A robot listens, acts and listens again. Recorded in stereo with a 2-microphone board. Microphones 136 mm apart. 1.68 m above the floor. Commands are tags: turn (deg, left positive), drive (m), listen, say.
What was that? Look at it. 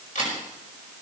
<turn deg="70"/>
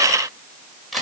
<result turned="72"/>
<say>Facing the camera shutter, over 4 m away.</say>